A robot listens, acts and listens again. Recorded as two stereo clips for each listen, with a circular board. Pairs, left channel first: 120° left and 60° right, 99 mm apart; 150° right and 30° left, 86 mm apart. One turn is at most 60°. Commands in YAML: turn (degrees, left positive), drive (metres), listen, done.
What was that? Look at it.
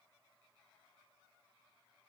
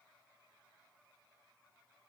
listen: true
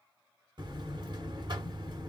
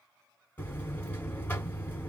turn: -60
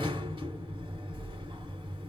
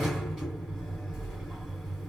turn: -60
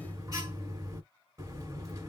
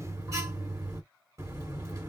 turn: -15
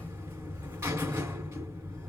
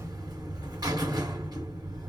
done: "Facing the buzzer."